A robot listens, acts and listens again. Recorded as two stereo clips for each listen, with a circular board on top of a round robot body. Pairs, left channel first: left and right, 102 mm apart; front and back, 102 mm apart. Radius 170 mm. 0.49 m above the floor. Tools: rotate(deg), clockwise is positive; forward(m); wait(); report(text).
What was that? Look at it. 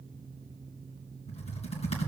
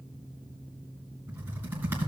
rotate(-110)
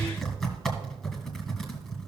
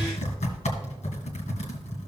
report("Facing the typing on a keyboard, 2 to 4 m away.")